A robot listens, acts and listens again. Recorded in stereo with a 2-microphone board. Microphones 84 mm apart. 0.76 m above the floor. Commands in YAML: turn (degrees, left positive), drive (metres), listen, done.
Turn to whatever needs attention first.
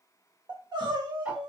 turn: -60
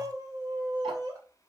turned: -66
turn: -50
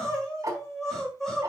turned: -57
done: "Facing the crying, 2 to 4 m away."